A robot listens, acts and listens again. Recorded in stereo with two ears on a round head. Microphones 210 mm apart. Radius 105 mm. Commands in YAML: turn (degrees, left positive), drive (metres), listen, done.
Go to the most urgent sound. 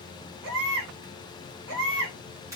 turn: -65
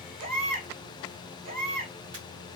turn: -40
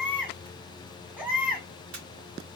drive: 1.0
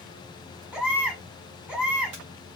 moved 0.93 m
drive: 1.0
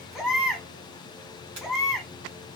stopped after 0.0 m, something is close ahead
done: "I am next to the baby crying."